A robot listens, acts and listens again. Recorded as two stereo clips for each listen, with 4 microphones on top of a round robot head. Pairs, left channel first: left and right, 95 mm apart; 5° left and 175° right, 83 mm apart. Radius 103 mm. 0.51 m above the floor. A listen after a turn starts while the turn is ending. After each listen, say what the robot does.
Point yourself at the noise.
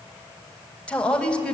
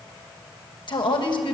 Turn 10° left.
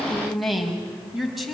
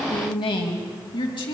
Found it: a woman speaking, straight ahead.